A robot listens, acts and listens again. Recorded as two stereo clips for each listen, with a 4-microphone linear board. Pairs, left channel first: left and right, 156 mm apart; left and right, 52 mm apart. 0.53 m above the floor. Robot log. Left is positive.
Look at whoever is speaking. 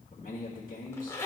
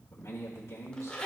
note: The man speaking: about 60° left or 120° left.
cmd yaw +60
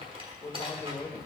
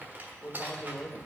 note: So it is at 35° left.
cmd yaw +35
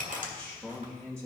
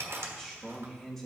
end: Facing the man speaking, 1 to 2 m away.